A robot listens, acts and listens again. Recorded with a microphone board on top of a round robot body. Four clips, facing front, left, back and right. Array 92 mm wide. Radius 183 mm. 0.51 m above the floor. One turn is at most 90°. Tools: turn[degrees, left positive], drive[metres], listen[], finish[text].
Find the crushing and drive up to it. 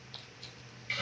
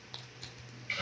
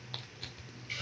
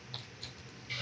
Thought: The crushing: 165° left.
Action: turn[90]
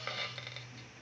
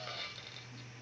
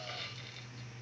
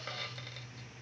Thought: Nothing new. It was at 75° left.
Action: turn[75]
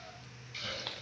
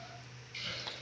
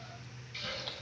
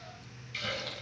Thought: The crushing is now 25° left.
Action: turn[25]
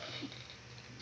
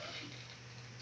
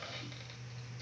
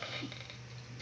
Action: listen[]
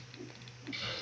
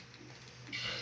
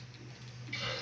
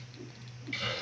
Action: listen[]
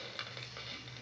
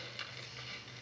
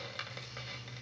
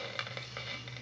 Action: finish[I heard crushing from this way, but can't make it out now. I did not reach it.]